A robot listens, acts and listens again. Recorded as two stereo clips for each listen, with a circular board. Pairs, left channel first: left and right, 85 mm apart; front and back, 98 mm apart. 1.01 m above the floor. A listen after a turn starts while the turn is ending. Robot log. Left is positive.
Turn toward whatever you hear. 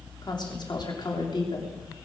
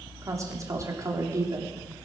note: The woman speaking: 125° left.
cmd yaw +125
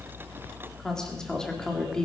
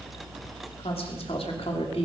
note: The woman speaking is now 10° left.
cmd yaw +10
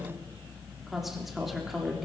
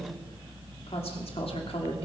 end: Facing the woman speaking.